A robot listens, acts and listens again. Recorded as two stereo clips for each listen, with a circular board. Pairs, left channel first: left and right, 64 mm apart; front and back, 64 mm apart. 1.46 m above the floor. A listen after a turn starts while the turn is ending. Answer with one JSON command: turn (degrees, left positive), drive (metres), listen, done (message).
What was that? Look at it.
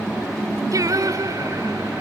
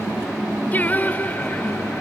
{"turn": -65}
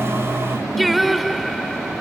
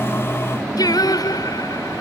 {"done": "Facing the singing."}